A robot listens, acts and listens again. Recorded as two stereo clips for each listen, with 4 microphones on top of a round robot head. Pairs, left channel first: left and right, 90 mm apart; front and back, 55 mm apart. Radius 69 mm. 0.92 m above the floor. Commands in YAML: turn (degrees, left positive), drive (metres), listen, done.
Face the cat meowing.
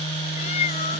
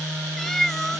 turn: 85
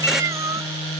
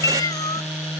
turn: -25
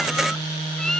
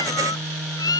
done: "Found it: a cat meowing, straight ahead."